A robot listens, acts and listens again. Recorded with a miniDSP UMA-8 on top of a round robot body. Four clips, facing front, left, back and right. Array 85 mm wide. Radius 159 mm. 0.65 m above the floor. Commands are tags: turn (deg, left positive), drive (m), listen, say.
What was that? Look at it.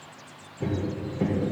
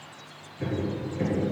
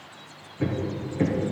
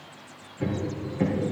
<turn deg="-175"/>
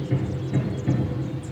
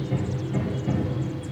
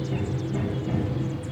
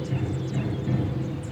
<say>Facing the hammering, 2 to 4 m away.</say>